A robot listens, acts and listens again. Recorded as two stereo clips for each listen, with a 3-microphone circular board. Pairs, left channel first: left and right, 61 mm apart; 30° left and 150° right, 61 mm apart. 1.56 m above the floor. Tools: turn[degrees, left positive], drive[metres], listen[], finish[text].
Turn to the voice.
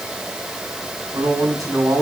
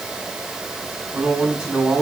Thought: The man speaking: 75° right.
Action: turn[-75]
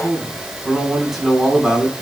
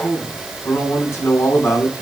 Thought: The man speaking is now 10° right.
Action: turn[-10]
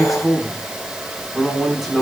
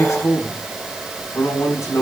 Action: finish[Facing the man speaking.]